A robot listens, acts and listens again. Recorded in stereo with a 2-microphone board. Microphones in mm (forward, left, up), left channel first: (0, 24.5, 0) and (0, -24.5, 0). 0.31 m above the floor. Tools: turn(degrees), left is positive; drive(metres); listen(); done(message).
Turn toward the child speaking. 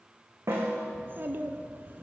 turn(degrees=-45)
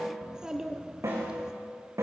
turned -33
turn(degrees=-15)
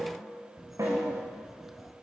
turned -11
done("Facing the child speaking, 2 to 4 m away.")